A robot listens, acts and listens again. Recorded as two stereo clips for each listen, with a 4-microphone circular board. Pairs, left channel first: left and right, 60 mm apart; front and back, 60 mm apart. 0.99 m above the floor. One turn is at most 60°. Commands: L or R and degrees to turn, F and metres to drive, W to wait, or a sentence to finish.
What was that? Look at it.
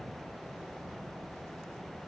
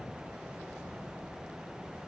W
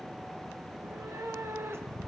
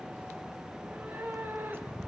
R60
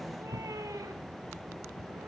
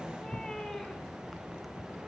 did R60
R60
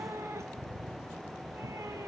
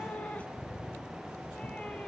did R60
R60
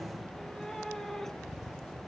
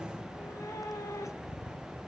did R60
Facing the cat meowing, 1 to 2 m away.